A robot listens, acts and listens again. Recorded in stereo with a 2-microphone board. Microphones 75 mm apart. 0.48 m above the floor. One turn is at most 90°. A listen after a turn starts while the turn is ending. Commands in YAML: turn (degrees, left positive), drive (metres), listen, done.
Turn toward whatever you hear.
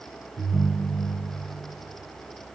turn: -90
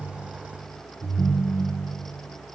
done: "Found it: a ringtone, straight ahead, 2 to 4 m away."